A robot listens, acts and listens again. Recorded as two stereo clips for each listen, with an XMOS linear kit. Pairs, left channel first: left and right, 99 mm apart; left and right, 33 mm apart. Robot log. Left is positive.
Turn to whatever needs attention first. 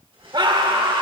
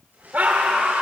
note: The scream: about 50° right or 130° right.
cmd yaw -50
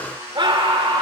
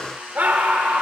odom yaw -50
note: So it is at 65° right.
cmd yaw -65
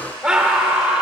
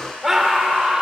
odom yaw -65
note: The scream is now 10° right.
cmd yaw -10
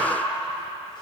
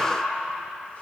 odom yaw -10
end: Found it: a scream, straight ahead.